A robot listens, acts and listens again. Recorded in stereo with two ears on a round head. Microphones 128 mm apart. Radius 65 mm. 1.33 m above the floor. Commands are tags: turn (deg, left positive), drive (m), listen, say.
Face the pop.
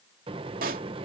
<turn deg="-70"/>
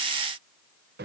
<listen/>
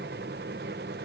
<say>I heard a pop, but can't make it out now. It was about straight ahead or 40° right.</say>